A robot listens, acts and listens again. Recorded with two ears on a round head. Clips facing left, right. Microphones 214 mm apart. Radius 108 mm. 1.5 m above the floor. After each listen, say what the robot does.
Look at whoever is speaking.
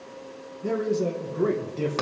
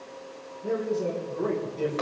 Turn 35° left.
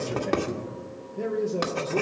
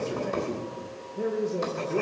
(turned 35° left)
Facing the man speaking, 1 to 2 m away.